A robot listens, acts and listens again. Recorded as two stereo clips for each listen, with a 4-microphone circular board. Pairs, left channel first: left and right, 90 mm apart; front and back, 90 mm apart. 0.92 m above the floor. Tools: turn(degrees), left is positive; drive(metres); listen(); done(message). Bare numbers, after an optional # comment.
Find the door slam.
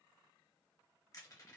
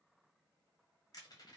listen()
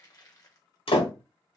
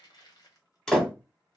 # The door slam: 80° left.
turn(80)
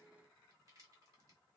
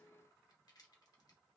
done("Facing where the door slam came from. I can't hear it now.")